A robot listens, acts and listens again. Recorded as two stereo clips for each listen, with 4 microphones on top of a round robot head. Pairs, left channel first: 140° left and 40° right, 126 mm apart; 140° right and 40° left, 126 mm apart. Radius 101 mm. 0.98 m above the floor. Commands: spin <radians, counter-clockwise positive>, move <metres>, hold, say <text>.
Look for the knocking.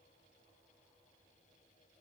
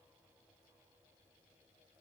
hold
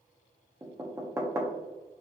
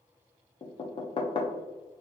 spin -1.83
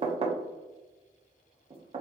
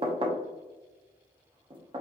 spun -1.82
say Facing the knocking, under 1 m away.